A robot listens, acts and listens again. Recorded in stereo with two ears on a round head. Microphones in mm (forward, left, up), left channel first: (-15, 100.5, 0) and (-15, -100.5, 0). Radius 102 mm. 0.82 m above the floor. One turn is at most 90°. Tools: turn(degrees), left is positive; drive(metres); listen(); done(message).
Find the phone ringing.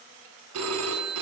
turn(degrees=-90)
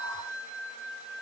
turn(degrees=-10)
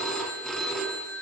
done("Found it: a phone ringing, straight ahead.")